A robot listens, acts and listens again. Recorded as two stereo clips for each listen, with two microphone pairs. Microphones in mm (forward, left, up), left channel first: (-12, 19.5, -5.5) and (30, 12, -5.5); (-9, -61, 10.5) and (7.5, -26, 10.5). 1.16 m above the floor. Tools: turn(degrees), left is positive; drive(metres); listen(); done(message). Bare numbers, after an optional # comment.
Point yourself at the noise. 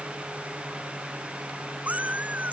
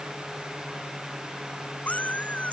# The cat meowing: 65° right.
turn(-65)
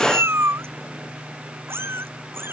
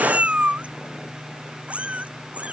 # The cat meowing is now 10° left.
turn(10)
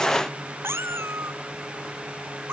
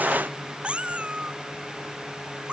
done("Facing the cat meowing.")